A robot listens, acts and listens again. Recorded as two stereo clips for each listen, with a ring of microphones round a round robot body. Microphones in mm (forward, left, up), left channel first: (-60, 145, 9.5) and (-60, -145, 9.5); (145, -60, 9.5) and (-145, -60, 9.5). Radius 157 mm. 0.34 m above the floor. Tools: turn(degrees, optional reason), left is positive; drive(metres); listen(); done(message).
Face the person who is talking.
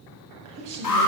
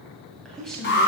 turn(degrees=-90, reason="The woman speaking: 90° right.")
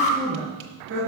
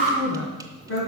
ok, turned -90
turn(degrees=-40, reason="The woman speaking is now 40° right.")
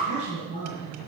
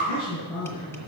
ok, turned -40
turn(degrees=-25, reason="The woman speaking is now 25° right.")
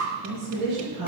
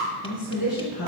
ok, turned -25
turn(degrees=-15, reason="The woman speaking is now 15° right.")
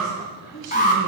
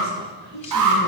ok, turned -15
turn(degrees=-10, reason="The woman speaking is now 10° right.")
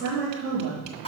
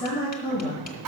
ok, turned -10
done("Found it: a woman speaking, straight ahead.")